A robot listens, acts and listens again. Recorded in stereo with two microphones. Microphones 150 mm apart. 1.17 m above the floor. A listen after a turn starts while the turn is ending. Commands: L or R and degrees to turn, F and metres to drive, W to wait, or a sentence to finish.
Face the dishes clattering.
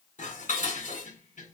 L65
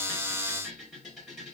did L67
Facing the dishes clattering, 2 to 4 m away.